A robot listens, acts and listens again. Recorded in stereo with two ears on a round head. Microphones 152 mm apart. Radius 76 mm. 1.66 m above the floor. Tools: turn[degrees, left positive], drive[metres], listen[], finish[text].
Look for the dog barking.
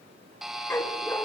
Action: turn[30]
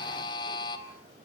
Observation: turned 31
Action: listen[]
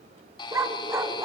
Thought: So it is at 20° right.
Action: turn[-20]
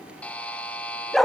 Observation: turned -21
Action: finish[Found it: a dog barking, straight ahead.]